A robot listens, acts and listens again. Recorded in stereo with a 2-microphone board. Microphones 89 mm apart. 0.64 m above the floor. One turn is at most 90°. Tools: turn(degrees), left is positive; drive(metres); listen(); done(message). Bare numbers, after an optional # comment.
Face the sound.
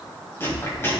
# The chewing: about 30° left or 150° left.
turn(30)
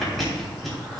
done("Found it: chewing, straight ahead, 2 to 4 m away.")